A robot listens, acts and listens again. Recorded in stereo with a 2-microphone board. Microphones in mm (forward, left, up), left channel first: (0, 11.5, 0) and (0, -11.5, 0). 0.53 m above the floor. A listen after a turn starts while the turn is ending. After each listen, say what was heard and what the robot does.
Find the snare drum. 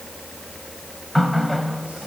Keep listening.
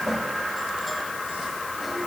Keep listening.
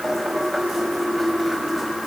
I can't make out a snare drum, only a running tap.